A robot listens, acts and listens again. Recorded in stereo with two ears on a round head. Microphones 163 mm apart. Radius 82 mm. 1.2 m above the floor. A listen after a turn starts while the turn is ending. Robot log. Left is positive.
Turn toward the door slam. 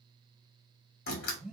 note: The door slam: about 50° left or 130° left.
cmd yaw +50
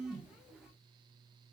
cmd idle
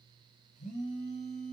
end: I heard a door slam, but can't make it out now. It was about straight ahead or 80° left.